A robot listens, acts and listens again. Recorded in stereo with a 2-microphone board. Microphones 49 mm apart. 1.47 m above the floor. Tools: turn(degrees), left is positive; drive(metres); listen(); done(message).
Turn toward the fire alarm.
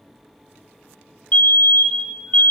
turn(degrees=35)
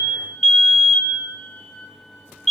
done("Facing the fire alarm, 1 to 2 m away.")